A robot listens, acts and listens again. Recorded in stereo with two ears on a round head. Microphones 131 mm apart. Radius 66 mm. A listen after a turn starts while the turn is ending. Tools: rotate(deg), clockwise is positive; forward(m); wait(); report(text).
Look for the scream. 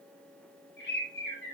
wait()
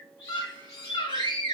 rotate(-30)
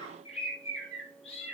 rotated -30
wait()
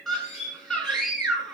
report("Found it: a scream, straight ahead.")